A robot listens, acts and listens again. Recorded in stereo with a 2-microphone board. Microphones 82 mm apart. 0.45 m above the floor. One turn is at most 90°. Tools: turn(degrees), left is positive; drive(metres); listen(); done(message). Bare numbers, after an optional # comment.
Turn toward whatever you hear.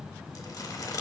# The crumpling: about 50° left or 130° left.
turn(50)
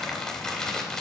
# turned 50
# So it is at 10° left.
turn(10)
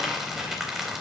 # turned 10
done("Facing the crumpling, 2 to 4 m away.")